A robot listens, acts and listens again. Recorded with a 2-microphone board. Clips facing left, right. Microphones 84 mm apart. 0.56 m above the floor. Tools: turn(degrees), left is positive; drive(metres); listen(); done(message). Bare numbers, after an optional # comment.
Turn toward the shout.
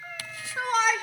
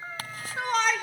turn(30)
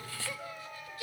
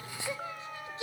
# So it is at 25° right.
turn(-25)
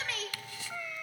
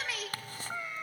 done("Found it: a shout, straight ahead, 2 to 4 m away.")